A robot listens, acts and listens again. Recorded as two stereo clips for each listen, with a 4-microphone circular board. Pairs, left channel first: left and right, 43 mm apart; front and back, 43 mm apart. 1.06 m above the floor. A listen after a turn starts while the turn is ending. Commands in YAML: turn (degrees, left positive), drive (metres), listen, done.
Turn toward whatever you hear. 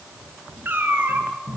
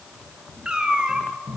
turn: -110
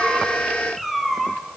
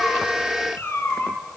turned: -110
done: "Facing the cat meowing, 2 to 4 m away."